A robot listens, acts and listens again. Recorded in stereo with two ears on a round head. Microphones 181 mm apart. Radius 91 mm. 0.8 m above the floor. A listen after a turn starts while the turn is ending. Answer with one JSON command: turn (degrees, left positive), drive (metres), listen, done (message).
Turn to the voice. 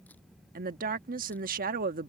{"turn": -45}
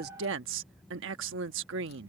{"turn": -85}
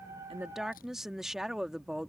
{"done": "Facing the woman speaking."}